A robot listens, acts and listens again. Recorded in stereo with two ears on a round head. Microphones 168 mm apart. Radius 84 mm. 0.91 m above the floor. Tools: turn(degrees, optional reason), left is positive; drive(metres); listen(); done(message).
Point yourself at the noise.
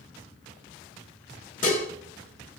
turn(degrees=45, reason="The dishes clattering: about 45° left or 135° left.")
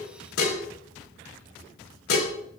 turn(degrees=90, reason="So it is at 90° left.")
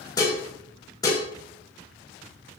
turn(degrees=20, reason="The dishes clattering is now 20° left.")
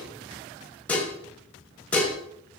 done("Found it: dishes clattering, straight ahead, 2 to 4 m away.")